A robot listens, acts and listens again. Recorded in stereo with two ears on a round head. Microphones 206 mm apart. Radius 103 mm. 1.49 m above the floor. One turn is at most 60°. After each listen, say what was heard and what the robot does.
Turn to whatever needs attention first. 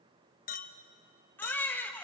Turn 30° left.
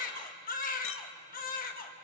So it is at 140° left. Turn 60° left.
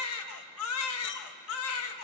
The baby crying is now 100° left. Turn 60° left.
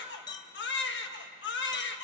The baby crying is now 55° left. Turn 55° left.
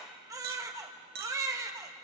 The baby crying is now 15° right. Turn 15° right.
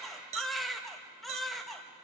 Found it: a baby crying, straight ahead.